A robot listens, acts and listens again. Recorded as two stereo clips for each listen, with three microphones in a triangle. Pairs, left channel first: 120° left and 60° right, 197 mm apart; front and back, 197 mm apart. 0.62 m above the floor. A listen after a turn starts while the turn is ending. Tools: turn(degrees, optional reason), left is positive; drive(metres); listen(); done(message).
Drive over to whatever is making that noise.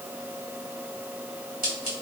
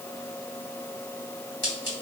turn(degrees=-15, reason="The scissors: 15° right.")
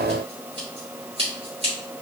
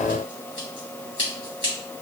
drive(metres=1.0)
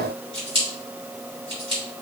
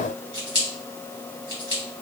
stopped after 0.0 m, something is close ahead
done("Blocked. The scissors is further on, straight ahead.")